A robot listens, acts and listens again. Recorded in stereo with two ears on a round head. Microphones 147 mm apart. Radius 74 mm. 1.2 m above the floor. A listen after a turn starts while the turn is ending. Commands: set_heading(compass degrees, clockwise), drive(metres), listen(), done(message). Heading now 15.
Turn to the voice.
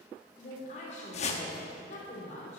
set_heading(335)
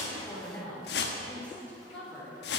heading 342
set_heading(332)
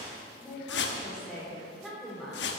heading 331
done("Found it: a woman speaking, straight ahead.")